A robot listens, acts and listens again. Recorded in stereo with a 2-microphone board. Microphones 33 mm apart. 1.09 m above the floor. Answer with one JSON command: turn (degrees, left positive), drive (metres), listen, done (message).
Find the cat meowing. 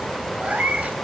{"turn": -50}
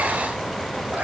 {"listen": true}
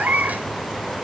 {"turn": -65}
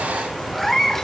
{"turn": 10}
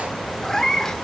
{"turn": 20}
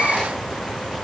{"turn": 15}
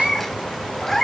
{"turn": 10}
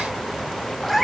{"done": "Found it: a cat meowing, straight ahead."}